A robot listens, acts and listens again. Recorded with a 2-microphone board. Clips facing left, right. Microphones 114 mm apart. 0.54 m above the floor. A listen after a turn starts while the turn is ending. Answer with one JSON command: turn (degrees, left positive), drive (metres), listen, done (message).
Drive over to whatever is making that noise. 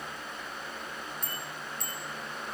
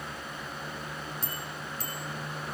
{"turn": -35}
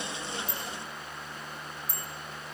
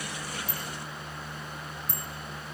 {"turn": -110}
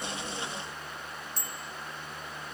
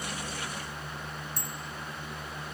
{"turn": -50}
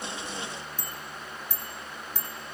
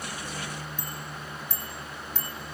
{"turn": 10}
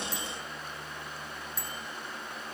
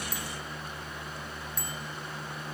{"drive": 1.0}
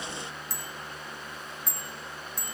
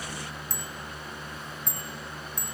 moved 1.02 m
{"drive": 1.0}
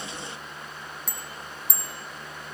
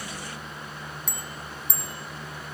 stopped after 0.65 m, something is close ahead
{"done": "Blocked. The bicycle bell is further on, straight ahead."}